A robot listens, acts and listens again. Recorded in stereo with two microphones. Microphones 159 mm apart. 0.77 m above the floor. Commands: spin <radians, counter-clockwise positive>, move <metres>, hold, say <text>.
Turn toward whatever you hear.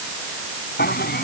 spin 1.57
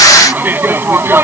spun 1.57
spin -0.26
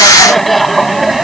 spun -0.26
say Facing the laughter.